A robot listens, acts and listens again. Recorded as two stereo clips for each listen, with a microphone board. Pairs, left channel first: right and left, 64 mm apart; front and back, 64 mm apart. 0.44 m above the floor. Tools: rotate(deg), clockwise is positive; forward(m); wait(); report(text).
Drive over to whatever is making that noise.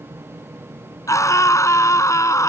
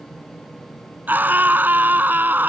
rotate(120)
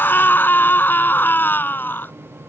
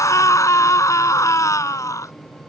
rotate(35)
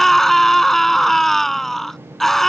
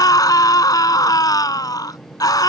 forward(1.0)
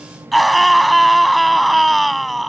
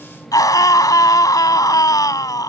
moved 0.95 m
forward(1.0)
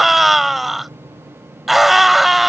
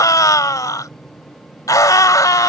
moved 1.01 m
forward(1.0)
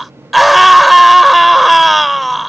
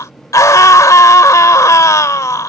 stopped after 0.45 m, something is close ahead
report("Arrived at the scream, straight ahead.")